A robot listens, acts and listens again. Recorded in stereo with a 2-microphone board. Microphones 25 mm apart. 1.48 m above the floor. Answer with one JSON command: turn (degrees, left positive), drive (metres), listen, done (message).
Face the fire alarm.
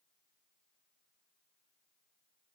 {"listen": true}
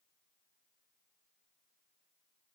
{"listen": true}
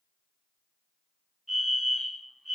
{"turn": -30}
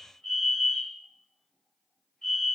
{"turn": 20}
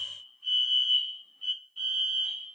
{"turn": 10}
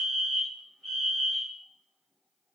{"done": "Facing the fire alarm, 2 to 4 m away."}